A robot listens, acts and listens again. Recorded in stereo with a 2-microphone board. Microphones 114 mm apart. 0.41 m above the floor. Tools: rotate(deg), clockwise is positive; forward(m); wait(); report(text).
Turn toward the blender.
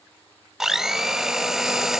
rotate(30)
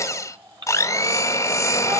rotate(-30)
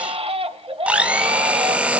rotate(10)
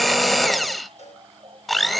report("Facing the blender, under 1 m away.")